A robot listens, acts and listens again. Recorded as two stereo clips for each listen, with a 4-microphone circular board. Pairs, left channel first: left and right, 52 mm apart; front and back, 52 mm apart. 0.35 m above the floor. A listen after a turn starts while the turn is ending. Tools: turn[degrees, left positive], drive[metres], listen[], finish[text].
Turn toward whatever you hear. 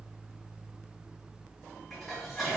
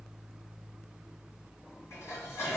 Action: finish[Facing the dishes clattering, 1 to 2 m away.]